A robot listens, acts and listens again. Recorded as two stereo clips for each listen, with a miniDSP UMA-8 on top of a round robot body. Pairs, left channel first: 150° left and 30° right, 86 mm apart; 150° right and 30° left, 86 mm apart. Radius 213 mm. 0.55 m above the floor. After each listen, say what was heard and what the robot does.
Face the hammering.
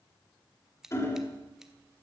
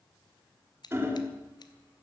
The hammering: 95° left. Turn 95° left.
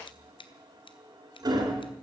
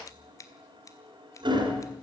The hammering is now 10° left. Turn 10° left.
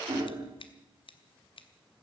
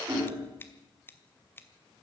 Facing the hammering, 2 to 4 m away.